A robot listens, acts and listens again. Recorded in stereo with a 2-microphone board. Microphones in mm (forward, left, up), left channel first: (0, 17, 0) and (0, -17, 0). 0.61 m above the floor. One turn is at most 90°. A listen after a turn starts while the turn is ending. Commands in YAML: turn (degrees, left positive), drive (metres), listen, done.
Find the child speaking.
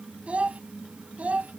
turn: -45
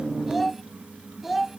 turn: -10
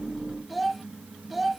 done: "Facing the child speaking."